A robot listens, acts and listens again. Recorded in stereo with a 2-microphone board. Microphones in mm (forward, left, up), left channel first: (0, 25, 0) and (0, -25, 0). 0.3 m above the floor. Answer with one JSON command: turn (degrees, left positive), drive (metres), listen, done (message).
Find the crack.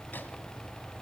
{"listen": true}
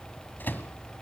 {"listen": true}
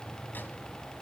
{"done": "I can't make out a crack to turn to."}